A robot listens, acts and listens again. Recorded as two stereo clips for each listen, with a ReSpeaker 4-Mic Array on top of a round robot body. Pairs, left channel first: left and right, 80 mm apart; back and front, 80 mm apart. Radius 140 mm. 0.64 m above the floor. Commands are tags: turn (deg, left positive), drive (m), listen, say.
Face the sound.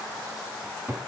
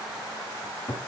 <turn deg="-155"/>
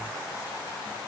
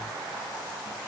<listen/>
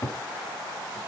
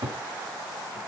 <turn deg="35"/>
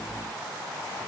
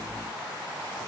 <listen/>
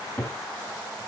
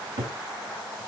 <turn deg="10"/>
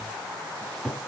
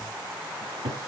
<say>Facing the cupboard door.</say>